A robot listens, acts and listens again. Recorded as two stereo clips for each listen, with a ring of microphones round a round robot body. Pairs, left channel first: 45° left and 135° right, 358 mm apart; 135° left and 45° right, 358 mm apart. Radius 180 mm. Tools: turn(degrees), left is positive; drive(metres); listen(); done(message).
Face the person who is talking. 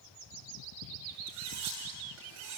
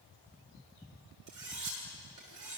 listen()
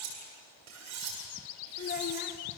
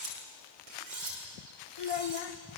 turn(degrees=110)
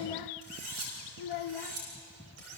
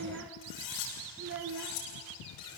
turn(degrees=10)
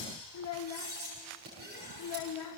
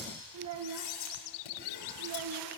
done("Facing the child speaking, 1 to 2 m away.")